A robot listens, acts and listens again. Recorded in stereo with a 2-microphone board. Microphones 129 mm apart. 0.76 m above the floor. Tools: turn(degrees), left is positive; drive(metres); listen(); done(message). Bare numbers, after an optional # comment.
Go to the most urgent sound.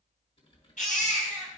turn(90)
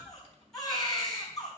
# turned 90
drive(1.0)
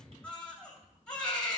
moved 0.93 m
drive(1.0)
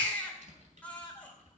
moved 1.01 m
# The baby crying is now 10° left.
turn(10)
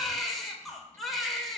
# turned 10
drive(1.0)
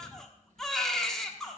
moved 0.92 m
drive(1.0)
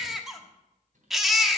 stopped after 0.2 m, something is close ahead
done("I am next to the baby crying.")